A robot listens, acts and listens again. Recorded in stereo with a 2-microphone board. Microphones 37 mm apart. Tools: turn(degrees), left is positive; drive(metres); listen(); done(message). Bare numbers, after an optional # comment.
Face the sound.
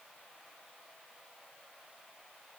listen()
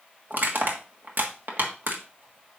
# The crushing: about 65° right or 115° right.
turn(-65)
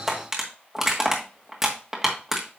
# So it is at 15° right.
turn(-15)
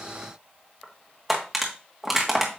done("Facing the crushing.")